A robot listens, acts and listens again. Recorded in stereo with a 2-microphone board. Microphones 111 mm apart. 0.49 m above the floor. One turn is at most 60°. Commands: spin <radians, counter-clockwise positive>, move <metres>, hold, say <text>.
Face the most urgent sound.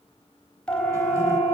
spin 0.52
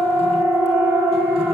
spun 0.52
spin -0.35
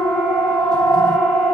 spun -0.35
say Found it: a siren, straight ahead, 2 to 4 m away.